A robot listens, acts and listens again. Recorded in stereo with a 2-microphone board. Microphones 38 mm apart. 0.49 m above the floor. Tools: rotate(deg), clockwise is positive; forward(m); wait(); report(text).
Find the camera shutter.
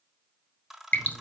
rotate(30)
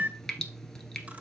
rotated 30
rotate(145)
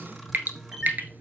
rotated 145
report("Facing the camera shutter.")